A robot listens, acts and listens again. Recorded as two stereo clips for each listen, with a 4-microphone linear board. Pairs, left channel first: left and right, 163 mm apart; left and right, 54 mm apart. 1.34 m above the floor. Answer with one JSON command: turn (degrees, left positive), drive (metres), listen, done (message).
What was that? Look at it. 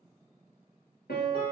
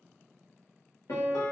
{"turn": 75}
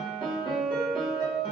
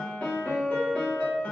{"turn": 30}
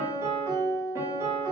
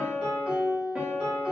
{"turn": -20}
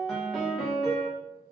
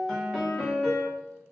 {"done": "Found it: a piano, straight ahead, under 1 m away."}